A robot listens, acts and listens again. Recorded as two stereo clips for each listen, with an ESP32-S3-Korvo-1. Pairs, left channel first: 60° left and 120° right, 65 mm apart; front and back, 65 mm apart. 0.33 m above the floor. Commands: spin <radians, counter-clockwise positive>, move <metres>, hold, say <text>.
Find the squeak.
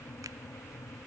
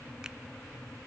hold
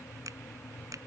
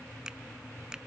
hold
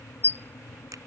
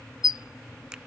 say Facing the squeak.